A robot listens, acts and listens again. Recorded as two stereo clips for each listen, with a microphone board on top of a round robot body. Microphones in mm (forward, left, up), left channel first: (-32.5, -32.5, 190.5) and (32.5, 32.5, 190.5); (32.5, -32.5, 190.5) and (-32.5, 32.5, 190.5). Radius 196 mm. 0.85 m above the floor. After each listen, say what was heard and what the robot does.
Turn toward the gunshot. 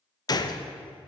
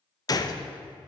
The gunshot: 90° right. Turn 90° right.
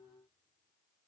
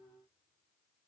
Facing where the gunshot came from. I can't hear it now.